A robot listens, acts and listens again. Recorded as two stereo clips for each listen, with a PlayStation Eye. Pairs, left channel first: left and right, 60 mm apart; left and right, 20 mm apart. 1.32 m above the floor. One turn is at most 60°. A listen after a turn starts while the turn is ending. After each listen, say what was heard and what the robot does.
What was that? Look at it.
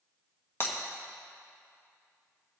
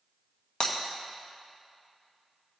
The breaking glass: about 40° left or 140° left. Turn 40° left.
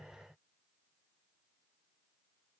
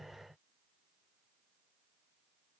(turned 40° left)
Keep listening.
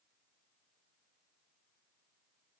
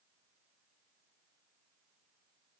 I heard breaking glass, but can't make it out now. It was about straight ahead or 100° left.